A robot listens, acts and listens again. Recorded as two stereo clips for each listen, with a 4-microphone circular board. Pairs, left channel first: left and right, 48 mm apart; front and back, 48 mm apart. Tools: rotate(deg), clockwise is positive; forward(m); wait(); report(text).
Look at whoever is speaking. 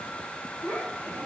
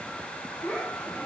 rotate(-65)
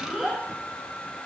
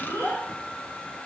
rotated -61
report("Found it: a child speaking, straight ahead, over 4 m away.")